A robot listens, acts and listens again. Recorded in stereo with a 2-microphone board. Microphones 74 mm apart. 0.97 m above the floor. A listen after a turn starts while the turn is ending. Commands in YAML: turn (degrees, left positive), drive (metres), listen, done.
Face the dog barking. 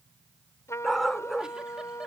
turn: 30
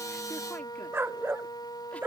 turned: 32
turn: -30
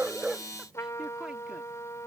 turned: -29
listen: true
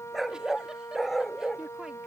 done: "Facing the dog barking."